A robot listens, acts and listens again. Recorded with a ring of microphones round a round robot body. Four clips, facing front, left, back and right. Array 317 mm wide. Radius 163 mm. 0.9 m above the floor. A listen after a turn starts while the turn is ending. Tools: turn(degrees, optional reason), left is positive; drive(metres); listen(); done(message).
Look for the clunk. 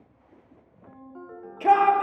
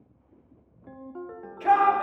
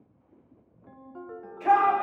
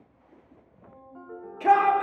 listen()
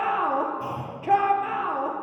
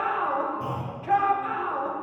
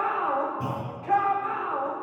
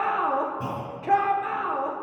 turn(degrees=-135, reason="The clunk: 135° right.")
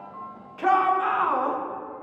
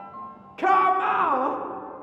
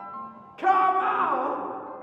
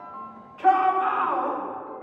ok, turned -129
done("Facing where the clunk came from. I can't hear it now.")